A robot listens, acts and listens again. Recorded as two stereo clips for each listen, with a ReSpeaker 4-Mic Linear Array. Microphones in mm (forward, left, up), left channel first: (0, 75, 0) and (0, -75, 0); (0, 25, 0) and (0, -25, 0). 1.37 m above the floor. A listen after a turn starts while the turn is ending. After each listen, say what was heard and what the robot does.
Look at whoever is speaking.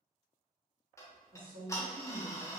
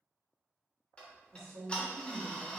The woman speaking: about 65° right or 115° right. Turn 65° right.
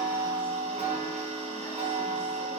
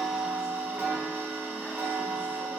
Keep listening.
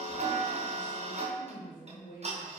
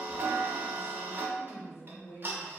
So it is at 65° left. Turn 65° left.
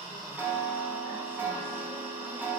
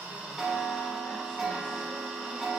Keep listening.
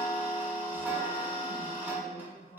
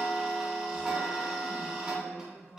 The woman speaking is now 40° left. Turn 40° left.
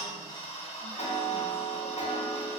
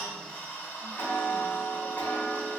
Keep listening.
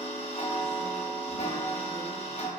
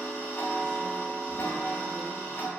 Keep listening.
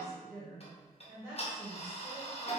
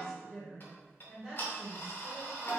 The woman speaking is now 15° right. Turn 15° right.
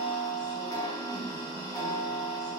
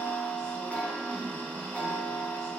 Keep listening.
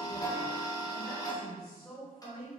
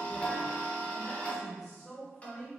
Found it: a woman speaking, straight ahead, 1 to 2 m away.